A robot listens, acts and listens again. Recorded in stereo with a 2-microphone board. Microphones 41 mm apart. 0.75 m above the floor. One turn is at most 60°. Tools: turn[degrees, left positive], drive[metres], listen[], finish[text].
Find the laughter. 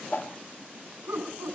Thought: The laughter: about 70° right or 110° right.
Action: turn[-60]
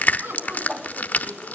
Thought: So it is at 60° right.
Action: turn[-60]
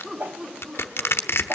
Thought: The laughter is now 15° right.
Action: turn[-15]
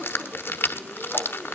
Action: listen[]
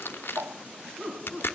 Thought: The laughter is now 10° right.
Action: turn[-10]
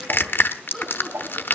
Action: finish[Facing the laughter.]